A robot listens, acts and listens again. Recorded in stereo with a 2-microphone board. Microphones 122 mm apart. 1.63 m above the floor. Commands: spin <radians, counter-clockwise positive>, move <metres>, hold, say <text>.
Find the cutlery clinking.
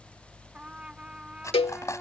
spin 0.44
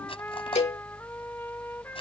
hold
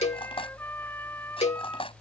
spin 2.27
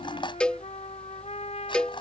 spin 0.79
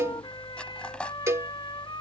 spin 0.17
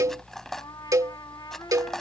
say Found it: cutlery clinking, straight ahead.